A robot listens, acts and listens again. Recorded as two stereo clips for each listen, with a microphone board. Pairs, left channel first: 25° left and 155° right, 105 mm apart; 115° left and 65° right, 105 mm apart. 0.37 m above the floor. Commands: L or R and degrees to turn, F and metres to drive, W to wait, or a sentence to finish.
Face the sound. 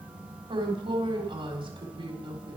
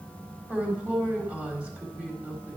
R140
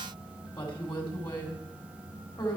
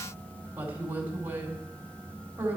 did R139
Facing the woman speaking.